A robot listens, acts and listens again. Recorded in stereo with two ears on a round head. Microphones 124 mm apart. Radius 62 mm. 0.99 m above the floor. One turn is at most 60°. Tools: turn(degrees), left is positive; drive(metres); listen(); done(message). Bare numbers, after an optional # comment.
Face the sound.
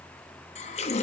# The running tap: about 50° left or 130° left.
turn(50)
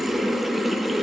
done("Facing the running tap.")